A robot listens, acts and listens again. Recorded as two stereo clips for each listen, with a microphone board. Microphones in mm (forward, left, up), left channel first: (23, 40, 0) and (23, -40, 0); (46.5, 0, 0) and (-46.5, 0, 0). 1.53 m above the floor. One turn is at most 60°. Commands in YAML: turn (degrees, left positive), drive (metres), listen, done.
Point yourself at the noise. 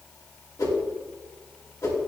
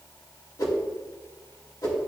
turn: 45
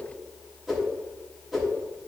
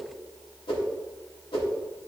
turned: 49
done: "Found it: a whoosh, straight ahead."